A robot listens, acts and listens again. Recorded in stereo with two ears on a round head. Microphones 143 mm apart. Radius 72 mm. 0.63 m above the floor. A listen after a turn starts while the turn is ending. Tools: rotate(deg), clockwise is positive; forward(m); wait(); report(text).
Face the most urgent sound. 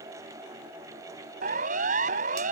rotate(55)
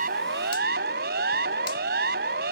rotate(65)
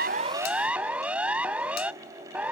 rotate(10)
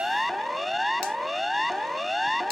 report("Found it: a siren, straight ahead.")